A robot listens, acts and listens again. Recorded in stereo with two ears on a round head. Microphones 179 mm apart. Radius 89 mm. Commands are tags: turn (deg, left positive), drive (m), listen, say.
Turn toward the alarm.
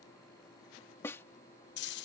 <listen/>
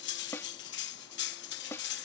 <listen/>
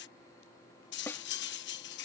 <say>I can't make out an alarm to turn to.</say>